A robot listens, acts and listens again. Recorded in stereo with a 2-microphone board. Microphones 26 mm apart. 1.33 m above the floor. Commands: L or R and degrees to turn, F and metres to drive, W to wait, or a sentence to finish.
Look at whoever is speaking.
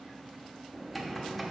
W
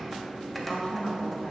L50
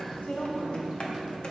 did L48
L80
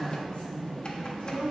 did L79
L45
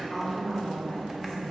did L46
Facing the woman speaking, 2 to 4 m away.